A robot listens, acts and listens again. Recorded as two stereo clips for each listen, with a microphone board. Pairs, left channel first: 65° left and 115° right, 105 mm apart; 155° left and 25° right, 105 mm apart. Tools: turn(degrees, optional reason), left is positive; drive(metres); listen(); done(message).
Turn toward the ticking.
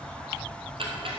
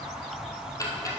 turn(degrees=-145, reason="The ticking: 145° right.")
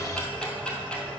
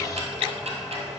turn(degrees=-15, reason="The ticking is now 15° right.")
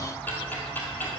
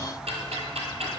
done("Found it: ticking, straight ahead, 1 to 2 m away.")